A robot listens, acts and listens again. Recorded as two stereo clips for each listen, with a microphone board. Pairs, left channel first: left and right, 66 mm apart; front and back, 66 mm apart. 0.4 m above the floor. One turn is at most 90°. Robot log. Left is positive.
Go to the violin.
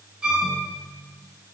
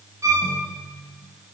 note: The violin: 155° right.
cmd yaw -90
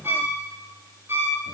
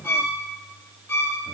note: The violin is now 35° right.
cmd yaw -35
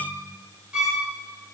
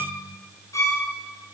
cmd fwd 1.0
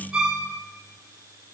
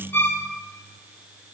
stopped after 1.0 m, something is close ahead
end: I am next to the violin.